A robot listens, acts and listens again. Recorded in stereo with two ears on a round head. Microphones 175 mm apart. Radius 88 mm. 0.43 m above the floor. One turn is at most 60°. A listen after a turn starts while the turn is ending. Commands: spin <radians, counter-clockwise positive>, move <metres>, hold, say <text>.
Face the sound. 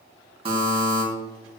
spin -0.52
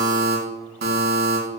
spin -1.05
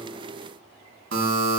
spin -1.05
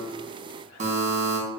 spin -0.70
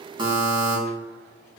spin -0.44
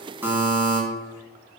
spin -0.26
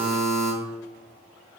say Facing the buzzer, 2 to 4 m away.